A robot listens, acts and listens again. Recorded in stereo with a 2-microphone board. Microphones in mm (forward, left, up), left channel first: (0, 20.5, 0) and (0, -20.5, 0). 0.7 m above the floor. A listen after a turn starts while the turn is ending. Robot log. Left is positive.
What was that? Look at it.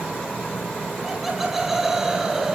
cmd yaw -30
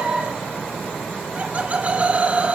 note: So it is at 140° right.
cmd yaw -140
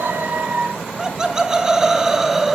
note: The laughter is now 10° right.
cmd yaw -10
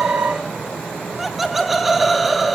end: Facing the laughter, 1 to 2 m away.